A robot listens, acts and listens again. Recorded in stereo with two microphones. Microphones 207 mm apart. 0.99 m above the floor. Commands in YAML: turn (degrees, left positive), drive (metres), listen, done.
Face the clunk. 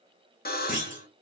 turn: -45
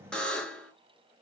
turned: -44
listen: true
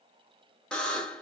done: "I heard a clunk, but can't make it out now. It was about straight ahead or 95° right."